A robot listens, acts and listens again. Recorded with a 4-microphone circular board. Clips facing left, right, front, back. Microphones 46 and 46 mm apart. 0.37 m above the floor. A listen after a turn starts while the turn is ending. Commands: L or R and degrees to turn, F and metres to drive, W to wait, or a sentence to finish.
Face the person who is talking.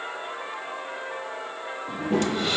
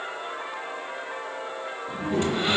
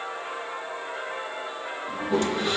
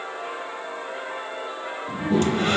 L80
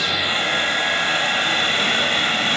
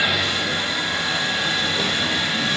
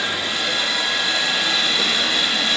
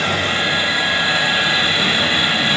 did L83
W
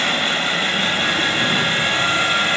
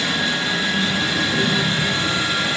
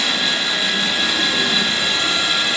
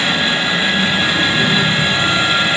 Found it: a child speaking, straight ahead.